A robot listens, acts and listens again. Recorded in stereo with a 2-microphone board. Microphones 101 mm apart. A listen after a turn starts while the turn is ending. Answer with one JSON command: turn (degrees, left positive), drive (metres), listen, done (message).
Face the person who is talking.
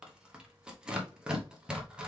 {"listen": true}
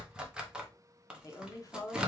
{"turn": 35}
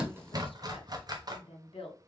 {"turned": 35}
{"turn": 110}
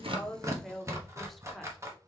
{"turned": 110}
{"done": "Found it: a woman speaking, straight ahead."}